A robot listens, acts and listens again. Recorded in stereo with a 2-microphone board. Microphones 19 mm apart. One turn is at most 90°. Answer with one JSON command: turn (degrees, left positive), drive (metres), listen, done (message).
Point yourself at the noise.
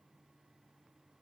{"listen": true}
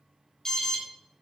{"turn": 20}
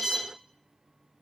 {"done": "Facing the alarm, 2 to 4 m away."}